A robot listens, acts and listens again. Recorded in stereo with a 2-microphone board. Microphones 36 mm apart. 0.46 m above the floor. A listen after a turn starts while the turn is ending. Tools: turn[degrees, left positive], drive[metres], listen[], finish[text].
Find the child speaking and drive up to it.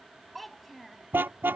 Action: turn[30]
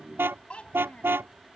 Thought: So it is at 145° left.
Action: turn[145]
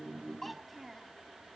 Action: drive[1.0]
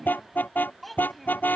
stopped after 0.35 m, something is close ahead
Action: finish[Blocked. The child speaking is further on, straight ahead.]